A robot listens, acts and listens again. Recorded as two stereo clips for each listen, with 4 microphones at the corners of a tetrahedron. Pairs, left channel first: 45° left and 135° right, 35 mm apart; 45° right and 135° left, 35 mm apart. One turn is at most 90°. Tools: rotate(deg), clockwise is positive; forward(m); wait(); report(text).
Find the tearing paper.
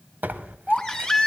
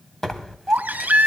rotate(90)
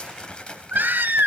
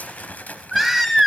rotate(20)
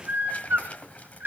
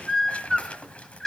report("Facing the tearing paper.")